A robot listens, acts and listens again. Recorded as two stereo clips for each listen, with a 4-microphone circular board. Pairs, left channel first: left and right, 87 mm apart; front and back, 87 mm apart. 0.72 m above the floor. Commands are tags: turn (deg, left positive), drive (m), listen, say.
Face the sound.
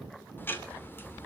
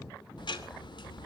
<turn deg="25"/>
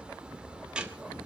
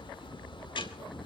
<turn deg="-10"/>
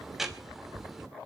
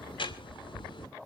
<say>Found it: ticking, straight ahead.</say>